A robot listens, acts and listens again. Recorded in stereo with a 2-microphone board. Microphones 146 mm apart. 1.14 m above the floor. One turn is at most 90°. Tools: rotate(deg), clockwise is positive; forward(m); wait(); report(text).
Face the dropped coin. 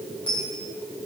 rotate(-40)
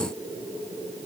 wait()
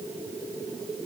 report("I heard a dropped coin, but can't make it out now. It was about straight ahead or 100° left.")